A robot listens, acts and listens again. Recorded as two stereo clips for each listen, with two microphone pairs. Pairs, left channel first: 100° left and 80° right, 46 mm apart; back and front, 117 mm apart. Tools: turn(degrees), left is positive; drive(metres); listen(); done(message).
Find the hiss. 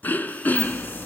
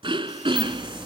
turn(degrees=85)
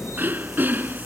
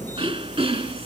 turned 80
done("Found it: a hiss, straight ahead.")